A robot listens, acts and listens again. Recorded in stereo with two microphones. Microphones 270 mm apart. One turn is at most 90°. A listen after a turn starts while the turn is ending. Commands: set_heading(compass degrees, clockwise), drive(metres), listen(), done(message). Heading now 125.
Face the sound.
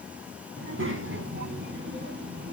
set_heading(165)
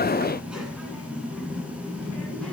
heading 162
done("Facing the child speaking.")